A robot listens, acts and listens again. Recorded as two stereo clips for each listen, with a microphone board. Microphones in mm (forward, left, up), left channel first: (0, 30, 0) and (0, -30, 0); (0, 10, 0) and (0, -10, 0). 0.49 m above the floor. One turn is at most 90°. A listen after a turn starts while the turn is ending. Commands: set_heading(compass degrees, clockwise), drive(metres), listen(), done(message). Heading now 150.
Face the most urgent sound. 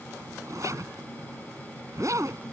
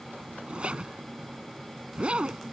listen()
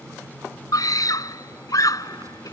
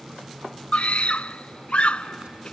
set_heading(60)
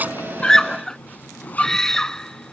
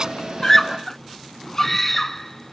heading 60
set_heading(50)
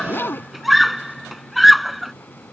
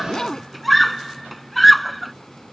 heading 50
done("Found it: a scream, straight ahead.")